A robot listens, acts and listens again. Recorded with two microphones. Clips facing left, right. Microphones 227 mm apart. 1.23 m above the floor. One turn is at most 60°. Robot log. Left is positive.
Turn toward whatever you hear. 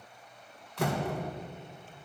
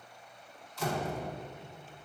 note: The door slam: about 65° left or 115° left.
cmd yaw +60
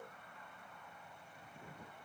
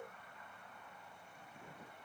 cmd idle
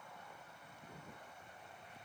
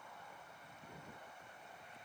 end: I heard a door slam, but can't make it out now. It was about 5° left or 55° left.